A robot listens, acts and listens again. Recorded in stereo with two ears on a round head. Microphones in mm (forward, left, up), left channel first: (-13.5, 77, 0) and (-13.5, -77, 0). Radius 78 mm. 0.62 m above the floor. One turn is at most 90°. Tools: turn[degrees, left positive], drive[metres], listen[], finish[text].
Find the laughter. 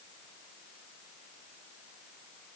Action: listen[]
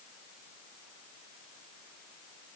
Action: listen[]
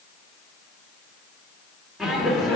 Action: turn[30]
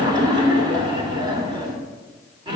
Thought: So it is at 25° right.
Action: turn[-25]
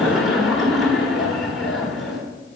Action: finish[Facing the laughter, 1 to 2 m away.]